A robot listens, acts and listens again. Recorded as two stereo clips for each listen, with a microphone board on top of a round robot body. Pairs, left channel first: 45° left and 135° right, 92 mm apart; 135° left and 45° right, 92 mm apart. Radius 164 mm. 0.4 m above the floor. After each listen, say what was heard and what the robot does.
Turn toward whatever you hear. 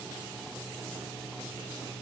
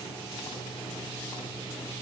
Keep listening.
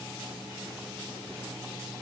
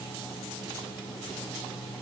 Keep listening.
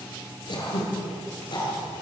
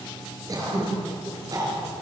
The throat clearing: 10° left. Turn 10° left.
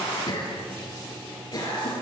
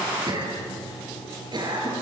Found it: throat clearing, straight ahead, over 4 m away.